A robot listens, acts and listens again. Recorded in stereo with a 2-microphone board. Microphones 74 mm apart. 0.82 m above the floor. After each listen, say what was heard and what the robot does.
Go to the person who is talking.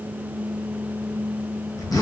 Keep listening.
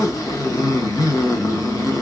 Keep listening.
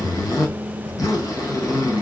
I can't make out anyone speaking, only a zipper.